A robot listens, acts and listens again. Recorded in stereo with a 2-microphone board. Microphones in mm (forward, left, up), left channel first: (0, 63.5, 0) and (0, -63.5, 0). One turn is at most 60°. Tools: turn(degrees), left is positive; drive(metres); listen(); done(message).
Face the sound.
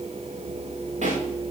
turn(degrees=-60)
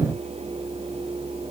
listen()
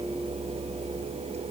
done("I heard a pop, but can't make it out now. It was about 10° right or 50° right.")